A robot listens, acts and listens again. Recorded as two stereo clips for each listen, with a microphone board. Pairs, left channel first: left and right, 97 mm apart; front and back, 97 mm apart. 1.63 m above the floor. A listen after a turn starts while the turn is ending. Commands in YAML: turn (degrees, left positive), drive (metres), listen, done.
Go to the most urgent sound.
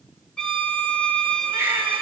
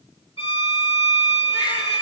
turn: -25
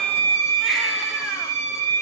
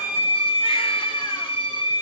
listen: true
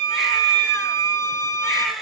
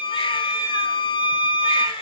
drive: 1.0
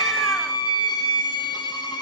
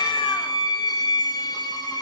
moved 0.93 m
listen: true
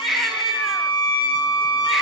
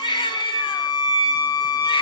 drive: 1.0
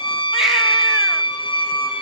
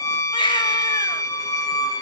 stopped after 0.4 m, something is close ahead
done: "I am next to the baby crying."